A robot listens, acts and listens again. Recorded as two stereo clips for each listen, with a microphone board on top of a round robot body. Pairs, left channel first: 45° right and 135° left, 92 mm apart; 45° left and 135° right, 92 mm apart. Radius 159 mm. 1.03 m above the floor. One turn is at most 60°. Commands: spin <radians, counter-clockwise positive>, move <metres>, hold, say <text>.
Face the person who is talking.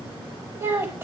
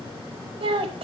spin -1.05
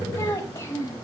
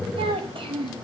spin -1.05
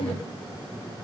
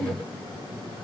spin -0.79
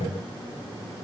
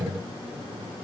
hold
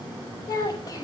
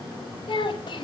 say Facing the child speaking.